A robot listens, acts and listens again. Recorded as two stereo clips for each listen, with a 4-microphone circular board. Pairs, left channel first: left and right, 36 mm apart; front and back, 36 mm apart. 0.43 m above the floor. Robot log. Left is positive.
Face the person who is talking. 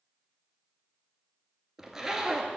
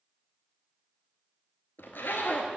cmd idle
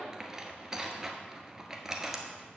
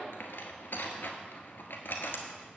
cmd idle
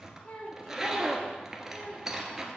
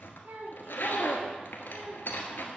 note: The child speaking: 150° left.
cmd yaw +150
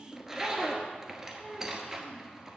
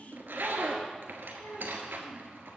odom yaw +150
end: Found it: a child speaking, straight ahead.